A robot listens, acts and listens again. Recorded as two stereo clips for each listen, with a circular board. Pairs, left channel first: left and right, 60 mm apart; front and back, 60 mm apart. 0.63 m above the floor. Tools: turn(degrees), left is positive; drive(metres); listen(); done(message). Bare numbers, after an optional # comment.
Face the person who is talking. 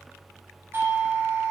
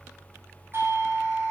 listen()
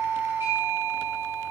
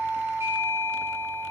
listen()
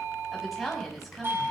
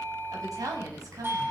# The woman speaking: straight behind.
turn(180)
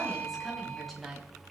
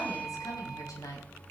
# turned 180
done("Found it: a woman speaking, straight ahead, over 4 m away.")